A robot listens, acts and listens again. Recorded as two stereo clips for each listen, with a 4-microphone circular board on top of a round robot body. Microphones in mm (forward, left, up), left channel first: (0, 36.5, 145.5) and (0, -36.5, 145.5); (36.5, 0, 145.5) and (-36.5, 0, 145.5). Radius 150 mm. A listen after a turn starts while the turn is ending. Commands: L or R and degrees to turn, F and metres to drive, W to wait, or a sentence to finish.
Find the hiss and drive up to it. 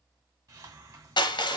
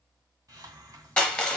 R130
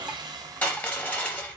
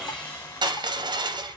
R50
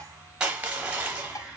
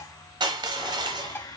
R15
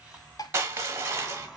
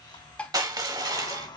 F1.0
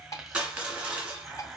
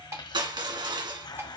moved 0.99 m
F1.0
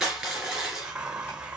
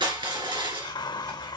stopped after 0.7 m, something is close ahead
R15
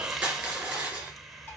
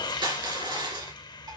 I am next to the hiss.